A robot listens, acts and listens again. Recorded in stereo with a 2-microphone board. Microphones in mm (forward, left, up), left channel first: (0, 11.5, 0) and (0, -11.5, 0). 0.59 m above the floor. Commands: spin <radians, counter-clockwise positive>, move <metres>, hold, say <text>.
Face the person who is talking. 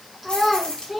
spin -0.52
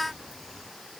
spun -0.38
hold
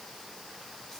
hold
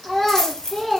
spin 0.17
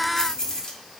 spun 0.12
hold
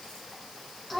say Found it: a child speaking, straight ahead.